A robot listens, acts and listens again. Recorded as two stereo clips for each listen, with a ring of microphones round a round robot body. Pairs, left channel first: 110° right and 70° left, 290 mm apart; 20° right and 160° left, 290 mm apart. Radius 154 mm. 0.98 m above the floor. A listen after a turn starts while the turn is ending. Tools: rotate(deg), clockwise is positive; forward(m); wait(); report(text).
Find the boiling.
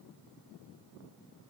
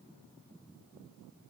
wait()
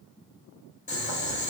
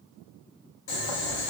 rotate(45)
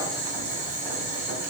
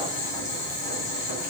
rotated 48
report("Found it: boiling, straight ahead, 1 to 2 m away.")